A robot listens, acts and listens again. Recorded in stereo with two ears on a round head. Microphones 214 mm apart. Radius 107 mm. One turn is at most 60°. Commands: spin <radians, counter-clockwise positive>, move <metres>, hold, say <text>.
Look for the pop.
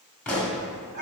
spin 0.52
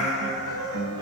hold
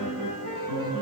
say I heard a pop, but can't make it out now. It was about 25° right or 145° left.